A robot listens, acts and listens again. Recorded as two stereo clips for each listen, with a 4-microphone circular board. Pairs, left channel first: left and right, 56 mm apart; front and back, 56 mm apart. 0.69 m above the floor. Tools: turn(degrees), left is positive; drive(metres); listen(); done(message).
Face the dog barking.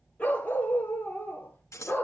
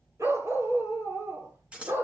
turn(degrees=140)
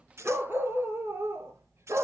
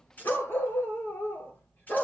turn(degrees=-55)
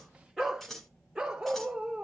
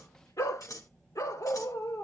turn(degrees=-15)
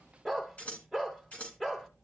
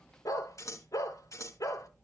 done("Facing the dog barking, 2 to 4 m away.")